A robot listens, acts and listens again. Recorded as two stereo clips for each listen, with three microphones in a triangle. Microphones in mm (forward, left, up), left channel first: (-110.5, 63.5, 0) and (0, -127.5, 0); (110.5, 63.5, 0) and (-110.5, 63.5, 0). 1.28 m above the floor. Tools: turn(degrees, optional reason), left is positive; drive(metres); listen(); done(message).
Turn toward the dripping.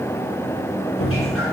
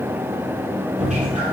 turn(degrees=125, reason="The dripping: 125° left.")
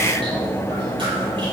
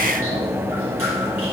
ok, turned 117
turn(degrees=10, reason="Nothing new. It was at 10° left.")
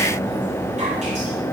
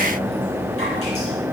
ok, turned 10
listen()
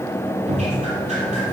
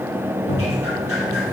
done("Facing the dripping, over 4 m away.")